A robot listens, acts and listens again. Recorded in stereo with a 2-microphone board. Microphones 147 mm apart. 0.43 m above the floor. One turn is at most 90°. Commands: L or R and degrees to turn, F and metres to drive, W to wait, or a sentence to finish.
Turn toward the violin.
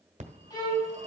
L30
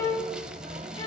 L90
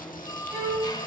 L10
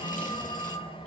W
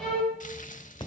Facing the violin, over 4 m away.